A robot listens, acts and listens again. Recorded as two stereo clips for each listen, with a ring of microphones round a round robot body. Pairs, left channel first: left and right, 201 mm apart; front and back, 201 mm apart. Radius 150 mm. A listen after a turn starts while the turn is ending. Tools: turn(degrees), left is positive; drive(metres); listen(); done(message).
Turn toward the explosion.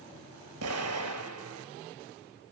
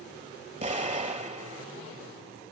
turn(degrees=-120)
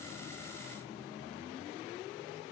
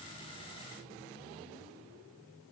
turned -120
done("I heard an explosion from this way, but can't make it out now.")